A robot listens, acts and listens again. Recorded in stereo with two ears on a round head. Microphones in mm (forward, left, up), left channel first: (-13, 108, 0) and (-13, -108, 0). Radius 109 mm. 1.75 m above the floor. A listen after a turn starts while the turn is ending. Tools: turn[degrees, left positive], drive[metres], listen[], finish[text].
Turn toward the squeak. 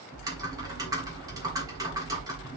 Action: listen[]
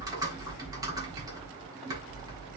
Action: listen[]
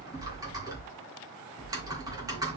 Action: finish[I can't make out a squeak to turn to.]